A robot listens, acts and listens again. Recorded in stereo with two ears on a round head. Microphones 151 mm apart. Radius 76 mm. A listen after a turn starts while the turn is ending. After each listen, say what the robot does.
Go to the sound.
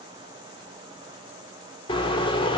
Turn 30° left.
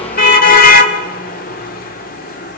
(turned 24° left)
Turn 120° left.
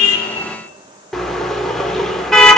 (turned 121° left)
Drive 1.0 m forward.
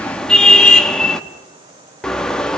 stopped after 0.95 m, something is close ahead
I am next to the car horn.